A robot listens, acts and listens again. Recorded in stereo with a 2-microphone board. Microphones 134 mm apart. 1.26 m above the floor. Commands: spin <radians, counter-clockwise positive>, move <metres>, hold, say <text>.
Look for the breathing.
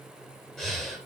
spin 0.52
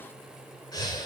spin 2.62
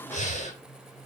spin 1.05
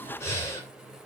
spin 0.35
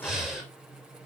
say Found it: breathing, straight ahead, 2 to 4 m away.